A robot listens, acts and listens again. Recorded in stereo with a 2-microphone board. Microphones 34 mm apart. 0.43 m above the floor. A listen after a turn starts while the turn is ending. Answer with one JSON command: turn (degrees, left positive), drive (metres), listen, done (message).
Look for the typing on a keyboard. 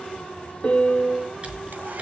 {"turn": -40}
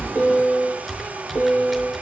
{"done": "Found it: typing on a keyboard, straight ahead."}